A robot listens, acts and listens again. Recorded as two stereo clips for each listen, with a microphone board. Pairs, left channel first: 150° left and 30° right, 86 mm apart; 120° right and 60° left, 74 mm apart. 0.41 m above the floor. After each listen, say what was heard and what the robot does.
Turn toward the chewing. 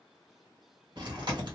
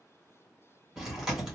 The chewing: 20° right. Turn 20° right.
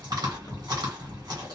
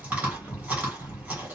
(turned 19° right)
Found it: chewing, straight ahead, 1 to 2 m away.